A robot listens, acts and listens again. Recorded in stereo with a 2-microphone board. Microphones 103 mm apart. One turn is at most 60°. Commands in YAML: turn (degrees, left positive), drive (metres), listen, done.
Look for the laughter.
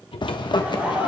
turn: -15
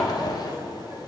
turn: -30
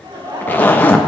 turn: -60
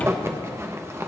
turn: -60
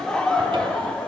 turn: 10
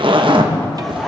listen: true
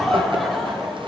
done: "Facing the laughter, 1 to 2 m away."